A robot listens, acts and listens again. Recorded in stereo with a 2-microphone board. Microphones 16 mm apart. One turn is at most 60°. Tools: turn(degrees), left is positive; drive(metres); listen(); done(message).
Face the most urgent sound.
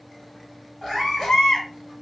turn(degrees=60)
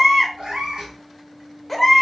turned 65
done("Facing the baby crying, 1 to 2 m away.")